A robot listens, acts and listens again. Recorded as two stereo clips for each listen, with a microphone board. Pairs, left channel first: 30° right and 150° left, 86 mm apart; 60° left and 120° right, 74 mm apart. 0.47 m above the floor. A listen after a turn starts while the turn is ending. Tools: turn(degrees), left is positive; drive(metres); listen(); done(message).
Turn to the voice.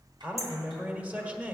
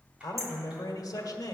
turn(degrees=80)
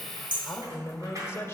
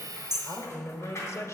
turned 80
turn(degrees=20)
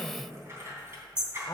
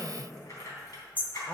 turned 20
turn(degrees=10)
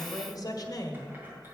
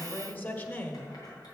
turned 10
done("Facing the man speaking.")